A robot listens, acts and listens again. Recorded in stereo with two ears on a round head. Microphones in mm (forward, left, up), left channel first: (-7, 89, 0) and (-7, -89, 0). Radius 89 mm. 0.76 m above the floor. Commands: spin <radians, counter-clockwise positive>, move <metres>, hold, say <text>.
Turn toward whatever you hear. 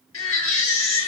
spin 1.22
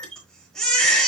say Facing the baby crying.